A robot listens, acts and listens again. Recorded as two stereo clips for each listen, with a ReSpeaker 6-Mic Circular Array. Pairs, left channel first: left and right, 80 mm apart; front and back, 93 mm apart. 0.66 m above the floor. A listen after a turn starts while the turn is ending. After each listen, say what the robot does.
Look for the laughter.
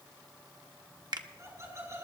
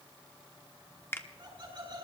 Turn 145° right.
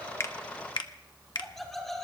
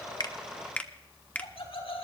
Found it: laughter, straight ahead.